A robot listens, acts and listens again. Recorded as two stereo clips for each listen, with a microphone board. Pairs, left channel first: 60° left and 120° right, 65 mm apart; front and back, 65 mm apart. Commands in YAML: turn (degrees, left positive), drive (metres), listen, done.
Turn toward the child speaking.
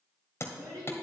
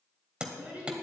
turn: -110
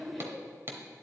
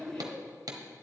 turn: -25
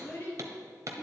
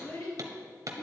done: "Facing the child speaking."